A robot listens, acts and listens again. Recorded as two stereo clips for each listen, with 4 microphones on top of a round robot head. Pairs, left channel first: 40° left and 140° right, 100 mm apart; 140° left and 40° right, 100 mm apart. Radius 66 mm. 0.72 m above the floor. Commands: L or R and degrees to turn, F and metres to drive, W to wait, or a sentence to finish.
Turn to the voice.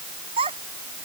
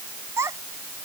R105
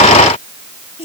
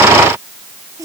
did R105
L15
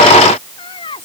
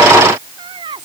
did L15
Found it: a child speaking, straight ahead.